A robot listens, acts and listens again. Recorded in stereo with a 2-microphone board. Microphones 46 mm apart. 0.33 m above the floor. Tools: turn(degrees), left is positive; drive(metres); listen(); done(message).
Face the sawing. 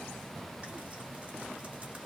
listen()
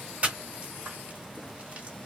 listen()
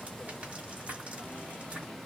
done("I can't make out sawing, only frying.")